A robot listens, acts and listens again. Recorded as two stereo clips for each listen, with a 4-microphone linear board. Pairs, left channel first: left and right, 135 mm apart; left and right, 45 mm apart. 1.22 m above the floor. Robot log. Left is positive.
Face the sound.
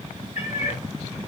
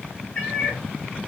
note: The cat meowing: about 50° left or 130° left.
cmd yaw +50
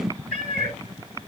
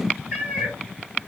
end: Facing the cat meowing, 2 to 4 m away.